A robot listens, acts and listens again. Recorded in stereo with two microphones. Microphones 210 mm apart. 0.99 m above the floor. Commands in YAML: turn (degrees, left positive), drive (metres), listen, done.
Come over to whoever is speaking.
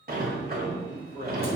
turn: 25
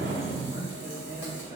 turn: 130
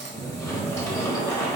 listen: true
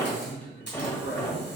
turn: 10
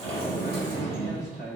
drive: 1.0
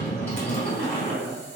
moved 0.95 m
drive: 1.0
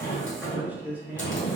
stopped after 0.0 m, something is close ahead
turn: -10
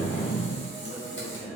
done: "Arrived at the man speaking, straight ahead."